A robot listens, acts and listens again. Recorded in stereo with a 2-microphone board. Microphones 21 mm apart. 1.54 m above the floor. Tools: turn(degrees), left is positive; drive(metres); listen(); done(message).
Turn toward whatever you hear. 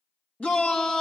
turn(degrees=90)
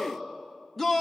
done("Found it: a shout, straight ahead, 2 to 4 m away.")